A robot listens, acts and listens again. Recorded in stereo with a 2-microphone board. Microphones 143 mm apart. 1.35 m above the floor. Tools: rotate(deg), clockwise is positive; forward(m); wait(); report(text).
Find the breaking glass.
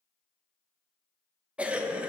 wait()
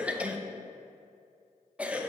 wait()
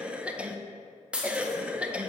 rotate(30)
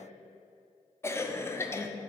wait()
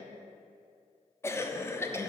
report("I heard breaking glass, but can't make it out now. It was about 20° left or 140° right.")